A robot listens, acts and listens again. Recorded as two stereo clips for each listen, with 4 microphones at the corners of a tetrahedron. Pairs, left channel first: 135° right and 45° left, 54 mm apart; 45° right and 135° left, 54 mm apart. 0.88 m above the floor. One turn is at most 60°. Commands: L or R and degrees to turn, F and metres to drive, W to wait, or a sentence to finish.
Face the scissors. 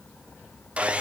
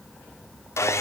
W
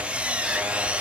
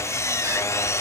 W
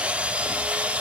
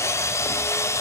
I can't make out scissors to turn to.